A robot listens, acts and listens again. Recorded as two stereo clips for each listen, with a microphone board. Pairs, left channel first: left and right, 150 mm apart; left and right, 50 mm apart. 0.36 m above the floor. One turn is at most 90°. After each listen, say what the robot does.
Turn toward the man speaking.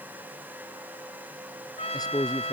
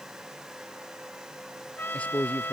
Turn 25° left.
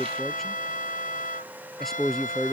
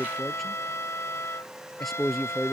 Facing the man speaking.